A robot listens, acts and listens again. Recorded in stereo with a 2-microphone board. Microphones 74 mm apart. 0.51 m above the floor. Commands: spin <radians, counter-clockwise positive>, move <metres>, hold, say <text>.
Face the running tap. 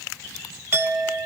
hold
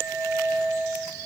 hold
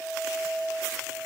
say I can't make out a running tap, only a clink.